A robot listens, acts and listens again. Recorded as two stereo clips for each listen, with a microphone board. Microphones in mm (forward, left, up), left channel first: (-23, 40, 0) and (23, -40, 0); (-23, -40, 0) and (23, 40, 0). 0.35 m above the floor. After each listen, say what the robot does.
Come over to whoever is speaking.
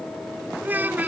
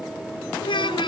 Turn 130° right.
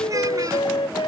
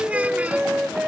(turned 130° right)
Keep listening.
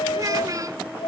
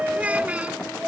Turn 15° right.
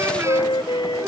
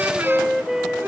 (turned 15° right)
Keep listening.
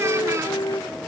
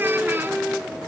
Keep listening.
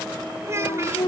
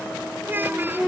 Drive 1.0 m forward.
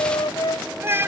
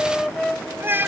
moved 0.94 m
Drive 1.0 m forward.
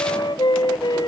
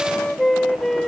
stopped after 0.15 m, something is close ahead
Keep listening.
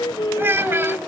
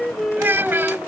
I am next to the child speaking.